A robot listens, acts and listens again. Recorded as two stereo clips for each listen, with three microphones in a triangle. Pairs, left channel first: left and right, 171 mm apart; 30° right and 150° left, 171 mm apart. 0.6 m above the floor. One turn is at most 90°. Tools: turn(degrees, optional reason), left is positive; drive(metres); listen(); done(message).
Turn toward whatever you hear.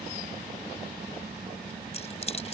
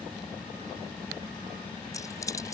turn(degrees=40, reason="The keys jangling: 40° left.")
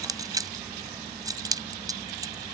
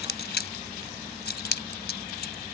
turn(degrees=-20, reason="The keys jangling is now 20° right.")
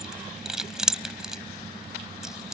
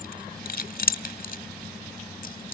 done("Facing the keys jangling.")